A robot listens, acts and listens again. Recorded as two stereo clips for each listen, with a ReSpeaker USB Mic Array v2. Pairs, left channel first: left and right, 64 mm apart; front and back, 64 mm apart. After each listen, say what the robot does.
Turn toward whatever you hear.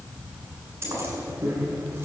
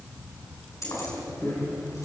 Turn 35° right.
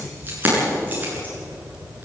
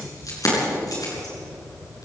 Turn 25° right.
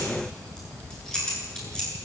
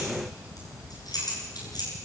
Turn 10° left.
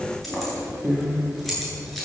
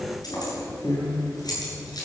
Found it: keys jangling, straight ahead, over 4 m away.